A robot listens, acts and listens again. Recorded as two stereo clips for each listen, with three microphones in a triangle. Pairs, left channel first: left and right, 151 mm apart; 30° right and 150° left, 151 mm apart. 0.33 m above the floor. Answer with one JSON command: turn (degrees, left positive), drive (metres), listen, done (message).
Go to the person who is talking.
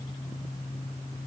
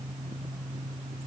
{"listen": true}
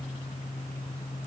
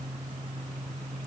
{"listen": true}
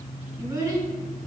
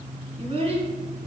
{"turn": -160}
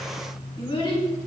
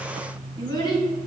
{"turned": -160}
{"turn": 35}
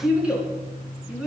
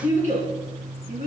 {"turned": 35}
{"turn": -10}
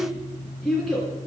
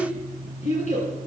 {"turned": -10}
{"drive": 1.0}
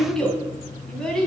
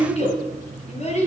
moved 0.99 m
{"drive": 1.0}
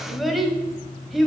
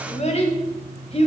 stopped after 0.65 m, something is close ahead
{"done": "I am next to the child speaking."}